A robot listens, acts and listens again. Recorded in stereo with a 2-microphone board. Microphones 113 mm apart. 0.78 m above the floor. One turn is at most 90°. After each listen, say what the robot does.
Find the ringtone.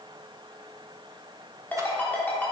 Turn 30° left.
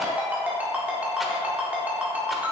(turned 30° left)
Turn 15° right.
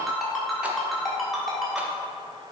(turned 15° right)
Found it: a ringtone, straight ahead.